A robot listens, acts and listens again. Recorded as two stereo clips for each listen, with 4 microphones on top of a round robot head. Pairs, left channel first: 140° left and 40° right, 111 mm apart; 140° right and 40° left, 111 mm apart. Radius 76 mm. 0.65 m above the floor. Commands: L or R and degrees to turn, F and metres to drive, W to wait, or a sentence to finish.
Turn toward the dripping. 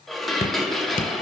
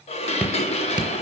L120
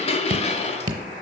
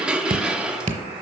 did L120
L15
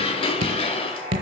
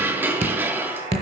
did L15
Found it: dripping, straight ahead, under 1 m away.